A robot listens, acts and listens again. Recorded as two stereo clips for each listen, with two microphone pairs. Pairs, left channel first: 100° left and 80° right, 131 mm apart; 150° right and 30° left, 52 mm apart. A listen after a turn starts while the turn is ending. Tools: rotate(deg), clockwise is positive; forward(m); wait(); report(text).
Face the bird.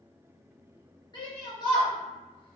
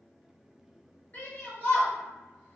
wait()
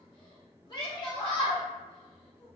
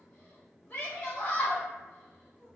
wait()
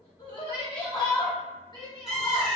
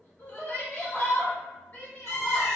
rotate(170)
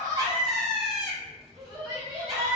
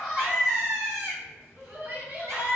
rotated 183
rotate(-10)
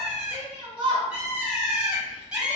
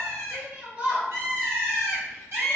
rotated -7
report("Facing the bird, 1 to 2 m away.")